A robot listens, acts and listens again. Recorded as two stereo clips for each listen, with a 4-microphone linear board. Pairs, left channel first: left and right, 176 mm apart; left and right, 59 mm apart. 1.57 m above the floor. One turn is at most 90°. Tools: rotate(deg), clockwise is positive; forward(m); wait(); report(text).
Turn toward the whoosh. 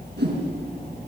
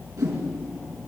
rotate(75)
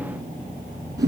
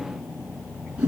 rotate(20)
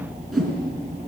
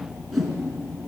report("Found it: a whoosh, straight ahead.")